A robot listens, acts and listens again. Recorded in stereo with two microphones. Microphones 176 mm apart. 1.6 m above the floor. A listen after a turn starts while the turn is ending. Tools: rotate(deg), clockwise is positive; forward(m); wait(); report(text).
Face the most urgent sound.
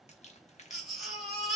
rotate(-30)
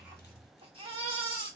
rotate(30)
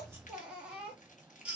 report("Found it: a baby crying, straight ahead, 1 to 2 m away.")